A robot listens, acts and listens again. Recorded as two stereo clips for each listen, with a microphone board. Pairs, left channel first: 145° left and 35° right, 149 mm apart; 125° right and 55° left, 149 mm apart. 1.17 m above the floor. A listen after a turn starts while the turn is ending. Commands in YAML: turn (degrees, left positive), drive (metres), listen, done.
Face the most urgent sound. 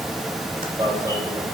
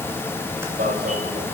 turn: 35
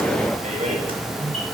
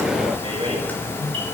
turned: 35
listen: true
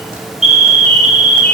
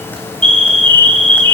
done: "Found it: an alarm, straight ahead."